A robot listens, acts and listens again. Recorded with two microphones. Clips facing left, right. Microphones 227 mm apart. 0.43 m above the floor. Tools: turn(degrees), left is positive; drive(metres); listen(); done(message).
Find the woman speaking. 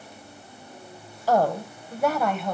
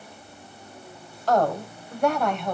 turn(degrees=30)
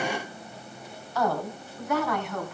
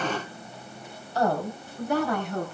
turn(degrees=-35)
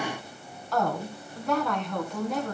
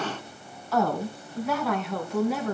done("Facing the woman speaking, over 4 m away.")